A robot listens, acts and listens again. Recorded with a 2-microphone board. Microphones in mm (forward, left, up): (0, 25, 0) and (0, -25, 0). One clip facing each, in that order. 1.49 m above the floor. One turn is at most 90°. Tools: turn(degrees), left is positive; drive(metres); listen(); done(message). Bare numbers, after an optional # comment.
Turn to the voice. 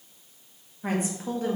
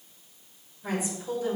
# The woman speaking: about 40° left or 140° left.
turn(40)
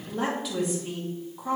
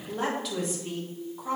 done("Found it: a woman speaking, straight ahead, 2 to 4 m away.")